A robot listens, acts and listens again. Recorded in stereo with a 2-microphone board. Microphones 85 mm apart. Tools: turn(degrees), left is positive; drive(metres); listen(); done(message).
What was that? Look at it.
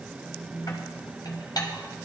turn(degrees=55)
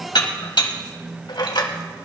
turn(degrees=70)
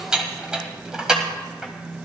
turn(degrees=-10)
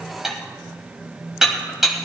done("Found it: dishes clattering, straight ahead.")